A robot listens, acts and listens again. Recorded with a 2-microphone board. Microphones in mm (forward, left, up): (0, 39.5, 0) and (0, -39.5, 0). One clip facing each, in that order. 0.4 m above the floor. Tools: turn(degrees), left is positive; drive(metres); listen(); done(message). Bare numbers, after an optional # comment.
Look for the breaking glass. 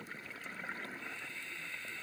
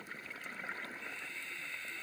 listen()
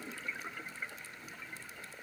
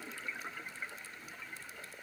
listen()
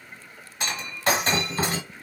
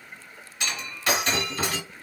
# The breaking glass: about 35° left or 145° left.
turn(35)
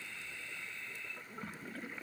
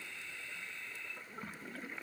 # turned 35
listen()
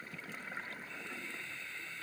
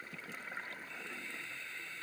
done("I heard breaking glass, but can't make it out now. It was about straight ahead or 110° left.")